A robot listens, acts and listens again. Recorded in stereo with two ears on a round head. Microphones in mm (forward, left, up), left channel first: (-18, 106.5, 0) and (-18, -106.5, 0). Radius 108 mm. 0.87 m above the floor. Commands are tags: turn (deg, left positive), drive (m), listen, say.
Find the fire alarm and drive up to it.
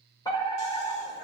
<turn deg="15"/>
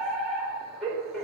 <drive m="1.0"/>
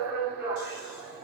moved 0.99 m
<turn deg="-10"/>
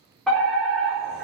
<drive m="1.0"/>
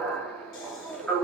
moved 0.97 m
<drive m="1.0"/>
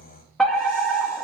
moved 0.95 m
<drive m="1.0"/>
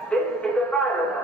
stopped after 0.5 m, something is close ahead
<say>I am next to the fire alarm.</say>